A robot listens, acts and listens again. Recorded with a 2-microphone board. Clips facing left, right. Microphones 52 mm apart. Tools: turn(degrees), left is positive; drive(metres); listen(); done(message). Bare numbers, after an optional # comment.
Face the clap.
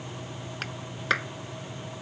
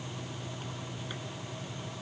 turn(90)
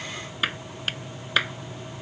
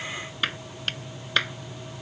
done("Found it: a clap, straight ahead.")